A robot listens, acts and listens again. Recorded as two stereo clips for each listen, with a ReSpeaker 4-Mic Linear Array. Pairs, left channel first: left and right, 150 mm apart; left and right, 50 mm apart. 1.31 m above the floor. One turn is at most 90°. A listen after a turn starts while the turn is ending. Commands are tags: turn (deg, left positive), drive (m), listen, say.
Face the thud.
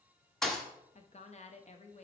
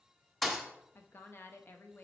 <turn deg="30"/>
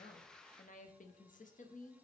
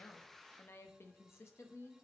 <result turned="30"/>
<listen/>
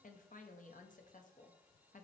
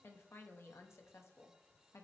<say>I heard a thud, but can't make it out now. It was about 30° right or 150° left.</say>